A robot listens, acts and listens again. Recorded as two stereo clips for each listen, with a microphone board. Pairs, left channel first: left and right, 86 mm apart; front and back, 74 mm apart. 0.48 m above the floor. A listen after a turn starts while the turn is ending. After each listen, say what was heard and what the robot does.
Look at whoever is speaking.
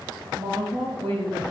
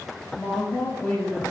The woman speaking: 80° right. Turn 80° right.
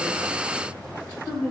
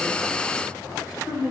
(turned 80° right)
The woman speaking is now 15° left. Turn 15° left.
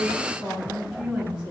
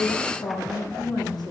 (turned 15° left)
The woman speaking is now 10° right. Turn 10° right.
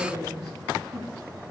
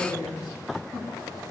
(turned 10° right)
Facing the woman speaking, 2 to 4 m away.